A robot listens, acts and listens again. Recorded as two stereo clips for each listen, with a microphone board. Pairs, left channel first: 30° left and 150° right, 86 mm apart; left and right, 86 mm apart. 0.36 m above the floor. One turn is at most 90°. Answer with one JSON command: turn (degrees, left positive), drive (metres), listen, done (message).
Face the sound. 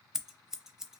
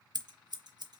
{"turn": -65}
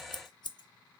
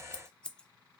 {"turn": 15}
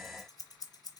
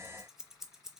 {"done": "Found it: scissors, straight ahead, under 1 m away."}